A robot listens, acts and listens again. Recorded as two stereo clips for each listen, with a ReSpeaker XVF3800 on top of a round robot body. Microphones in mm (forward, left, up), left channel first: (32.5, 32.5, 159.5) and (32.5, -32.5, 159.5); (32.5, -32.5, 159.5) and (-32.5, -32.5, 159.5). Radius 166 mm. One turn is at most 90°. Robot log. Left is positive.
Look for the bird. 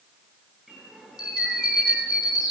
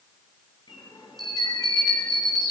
end: Found it: a bird, straight ahead.